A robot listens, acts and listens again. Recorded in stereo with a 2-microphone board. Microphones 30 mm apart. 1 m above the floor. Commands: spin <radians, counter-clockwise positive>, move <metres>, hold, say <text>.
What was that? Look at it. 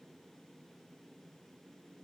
hold
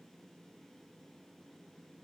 hold
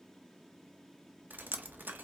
spin -1.13
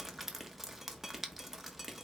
say Facing the dripping, under 1 m away.